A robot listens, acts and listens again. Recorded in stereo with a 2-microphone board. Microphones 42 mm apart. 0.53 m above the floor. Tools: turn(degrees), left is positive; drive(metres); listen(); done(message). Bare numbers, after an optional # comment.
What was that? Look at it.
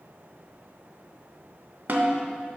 # The snare drum: about 55° right or 125° right.
turn(-55)
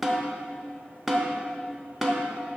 done("Facing the snare drum.")